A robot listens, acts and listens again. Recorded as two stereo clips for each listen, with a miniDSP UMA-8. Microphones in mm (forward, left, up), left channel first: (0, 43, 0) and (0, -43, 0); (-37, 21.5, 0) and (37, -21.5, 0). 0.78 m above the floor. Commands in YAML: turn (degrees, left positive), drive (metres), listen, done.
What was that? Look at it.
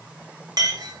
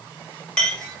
turn: -130
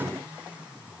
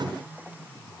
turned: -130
listen: true
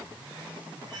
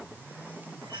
listen: true
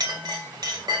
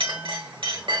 turn: -50
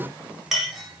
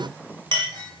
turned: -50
done: "Facing the clink."